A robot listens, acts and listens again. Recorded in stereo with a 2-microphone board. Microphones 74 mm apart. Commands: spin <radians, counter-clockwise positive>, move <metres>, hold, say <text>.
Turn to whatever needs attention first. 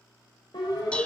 spin 1.22
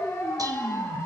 spin 0.52
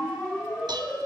spin 0.17
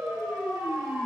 say Facing the siren, over 4 m away.